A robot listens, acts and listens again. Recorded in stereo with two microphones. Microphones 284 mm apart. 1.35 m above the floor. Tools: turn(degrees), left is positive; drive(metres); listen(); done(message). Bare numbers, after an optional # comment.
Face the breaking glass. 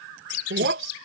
# The breaking glass: about 45° right or 135° right.
turn(-45)
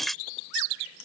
done("Found it: breaking glass, straight ahead.")